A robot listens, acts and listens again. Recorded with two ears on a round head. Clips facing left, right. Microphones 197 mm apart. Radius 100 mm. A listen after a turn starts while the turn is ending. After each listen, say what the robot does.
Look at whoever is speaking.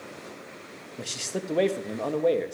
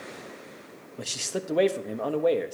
Turn 30° left.
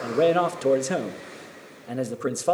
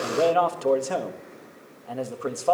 Turn 155° left.
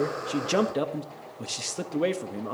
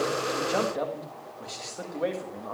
Turn 45° left.
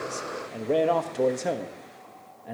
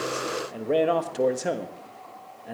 Found it: a man speaking, straight ahead, 1 to 2 m away.